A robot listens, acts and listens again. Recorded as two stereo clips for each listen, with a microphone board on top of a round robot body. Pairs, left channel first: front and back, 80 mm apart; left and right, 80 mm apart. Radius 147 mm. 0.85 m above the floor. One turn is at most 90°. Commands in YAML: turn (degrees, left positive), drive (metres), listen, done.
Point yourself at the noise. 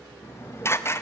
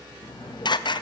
turn: 60
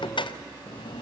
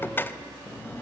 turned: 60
turn: 25
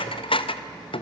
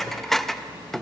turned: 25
done: "Found it: dishes clattering, straight ahead."